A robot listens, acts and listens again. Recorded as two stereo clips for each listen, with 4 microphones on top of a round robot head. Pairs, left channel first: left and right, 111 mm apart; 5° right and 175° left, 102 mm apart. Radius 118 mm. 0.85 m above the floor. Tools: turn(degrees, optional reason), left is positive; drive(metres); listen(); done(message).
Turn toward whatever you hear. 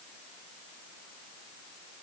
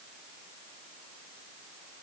listen()
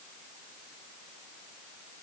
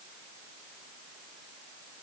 listen()
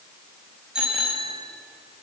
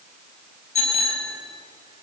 done("Facing the bicycle bell.")